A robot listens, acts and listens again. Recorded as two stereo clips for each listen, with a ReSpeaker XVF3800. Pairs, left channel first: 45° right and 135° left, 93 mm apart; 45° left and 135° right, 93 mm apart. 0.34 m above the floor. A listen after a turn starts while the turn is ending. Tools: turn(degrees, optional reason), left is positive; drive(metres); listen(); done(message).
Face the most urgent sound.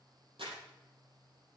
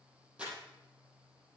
listen()
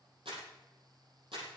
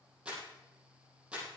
listen()
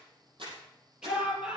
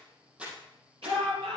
turn(degrees=-145, reason="The shout: 145° right.")
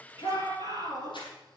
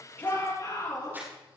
done("Found it: a shout, straight ahead.")